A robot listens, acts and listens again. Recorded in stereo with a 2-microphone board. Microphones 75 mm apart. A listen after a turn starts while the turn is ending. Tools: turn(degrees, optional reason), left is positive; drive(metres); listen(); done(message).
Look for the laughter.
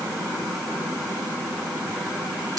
listen()
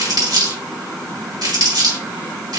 listen()
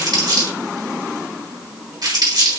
done("I can't make out laughter, only crumpling.")